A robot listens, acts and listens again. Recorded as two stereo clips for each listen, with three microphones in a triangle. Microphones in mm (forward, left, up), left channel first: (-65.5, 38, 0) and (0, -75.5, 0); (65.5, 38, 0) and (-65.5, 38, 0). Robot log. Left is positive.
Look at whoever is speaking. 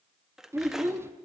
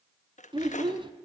note: The child speaking: 130° right.
cmd yaw -130
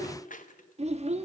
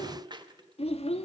note: The child speaking is now 35° right.
cmd yaw -35
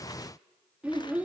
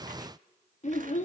note: The child speaking is now 20° left.
cmd yaw +20
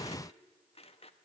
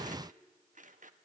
cmd idle
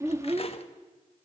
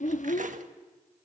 end: Found it: a child speaking, straight ahead, 1 to 2 m away.